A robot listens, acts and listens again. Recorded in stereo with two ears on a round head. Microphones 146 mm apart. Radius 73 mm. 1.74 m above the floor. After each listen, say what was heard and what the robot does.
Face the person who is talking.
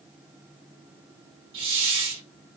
Keep listening.
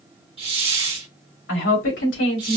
Turn 90° left.
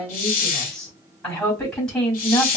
Found it: a woman speaking, straight ahead, 2 to 4 m away.